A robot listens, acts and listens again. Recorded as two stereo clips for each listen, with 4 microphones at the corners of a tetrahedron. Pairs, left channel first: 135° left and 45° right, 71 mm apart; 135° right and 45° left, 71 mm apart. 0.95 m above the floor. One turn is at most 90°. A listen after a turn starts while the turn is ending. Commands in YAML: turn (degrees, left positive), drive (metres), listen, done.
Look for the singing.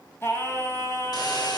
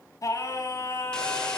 turn: -90
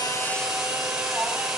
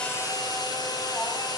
turn: -90
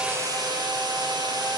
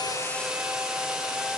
turn: -20
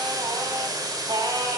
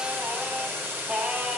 turn: -30
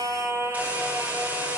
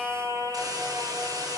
done: "Found it: singing, straight ahead, 2 to 4 m away."